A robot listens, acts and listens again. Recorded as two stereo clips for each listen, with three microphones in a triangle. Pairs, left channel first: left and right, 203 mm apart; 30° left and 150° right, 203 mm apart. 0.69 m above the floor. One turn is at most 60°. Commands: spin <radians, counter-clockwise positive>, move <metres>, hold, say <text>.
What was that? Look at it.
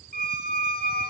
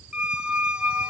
spin 1.05
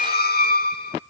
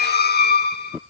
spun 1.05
spin 1.05
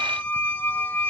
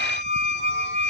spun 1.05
spin 0.17
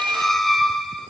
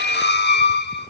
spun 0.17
say Facing the squeak, under 1 m away.